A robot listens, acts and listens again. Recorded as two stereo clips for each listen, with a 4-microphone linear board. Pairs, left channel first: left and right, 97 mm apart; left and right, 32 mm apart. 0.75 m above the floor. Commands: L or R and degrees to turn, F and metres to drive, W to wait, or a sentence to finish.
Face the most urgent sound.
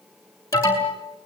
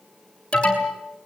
L30
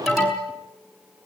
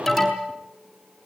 Found it: an alarm, straight ahead, over 4 m away.